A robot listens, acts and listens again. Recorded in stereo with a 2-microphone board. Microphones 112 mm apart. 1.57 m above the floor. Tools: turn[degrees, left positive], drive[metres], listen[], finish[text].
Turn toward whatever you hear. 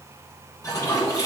Thought: The toilet flushing: about 30° left or 150° left.
Action: turn[30]
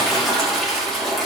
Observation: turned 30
Action: finish[Facing the toilet flushing, 2 to 4 m away.]